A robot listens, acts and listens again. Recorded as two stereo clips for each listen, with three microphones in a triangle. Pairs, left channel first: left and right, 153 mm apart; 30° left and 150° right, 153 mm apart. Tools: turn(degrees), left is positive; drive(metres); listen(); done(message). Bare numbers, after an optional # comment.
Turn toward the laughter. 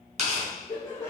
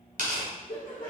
# The laughter: 20° left.
turn(20)
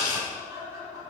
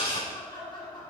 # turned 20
# The laughter is now 30° right.
turn(-30)
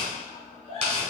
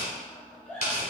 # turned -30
# The laughter is now 45° right.
turn(-45)
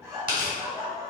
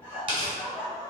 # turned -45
# The laughter is now 35° right.
turn(-35)
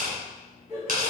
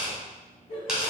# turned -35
# The laughter is now 15° right.
turn(-15)
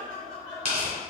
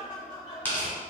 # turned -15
done("Found it: laughter, straight ahead.")